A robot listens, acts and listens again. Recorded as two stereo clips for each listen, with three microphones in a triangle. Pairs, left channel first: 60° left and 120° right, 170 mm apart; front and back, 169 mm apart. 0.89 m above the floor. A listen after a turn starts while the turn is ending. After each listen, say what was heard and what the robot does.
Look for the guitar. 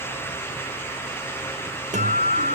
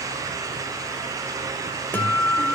The guitar: 80° right. Turn 80° right.
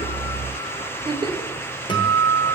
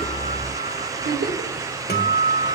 Facing the guitar, 2 to 4 m away.